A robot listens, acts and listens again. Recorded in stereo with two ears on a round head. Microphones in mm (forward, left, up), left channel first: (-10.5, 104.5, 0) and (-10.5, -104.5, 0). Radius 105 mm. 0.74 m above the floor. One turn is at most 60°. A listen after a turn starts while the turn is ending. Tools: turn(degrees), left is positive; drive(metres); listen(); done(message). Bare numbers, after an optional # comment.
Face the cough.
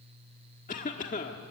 # The cough: about 35° left or 145° left.
turn(35)
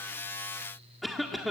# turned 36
done("Facing the cough.")